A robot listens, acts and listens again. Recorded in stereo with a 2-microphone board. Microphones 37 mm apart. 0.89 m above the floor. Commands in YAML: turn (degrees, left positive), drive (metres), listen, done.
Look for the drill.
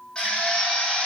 turn: 25
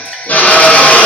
turn: 130
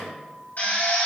turn: 55
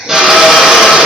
turn: -10
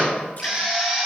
done: "Found it: a drill, straight ahead, 2 to 4 m away."